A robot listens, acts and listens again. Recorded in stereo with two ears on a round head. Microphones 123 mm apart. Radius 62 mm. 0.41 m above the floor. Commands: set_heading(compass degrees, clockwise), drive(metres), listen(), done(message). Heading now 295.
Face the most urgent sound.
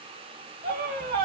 set_heading(355)
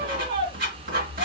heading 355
set_heading(35)
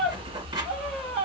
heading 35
done("Found it: a scream, straight ahead.")